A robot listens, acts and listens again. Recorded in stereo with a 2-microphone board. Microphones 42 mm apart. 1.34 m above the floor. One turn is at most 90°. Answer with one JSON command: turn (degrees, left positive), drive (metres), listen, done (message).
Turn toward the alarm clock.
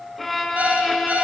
{"turn": -40}
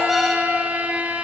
{"done": "Facing the alarm clock, 2 to 4 m away."}